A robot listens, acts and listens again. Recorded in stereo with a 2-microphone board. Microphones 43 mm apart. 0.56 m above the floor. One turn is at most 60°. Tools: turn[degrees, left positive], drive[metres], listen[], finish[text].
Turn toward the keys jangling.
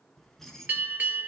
Action: turn[30]
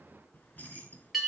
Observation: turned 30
Thought: So it is at 145° left.
Action: turn[60]
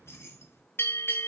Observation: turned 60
Thought: The keys jangling is now 75° left.
Action: turn[60]
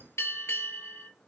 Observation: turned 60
Thought: The keys jangling is now 45° left.
Action: turn[45]
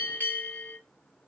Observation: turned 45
Action: listen[]
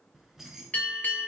Action: finish[Found it: keys jangling, straight ahead, 2 to 4 m away.]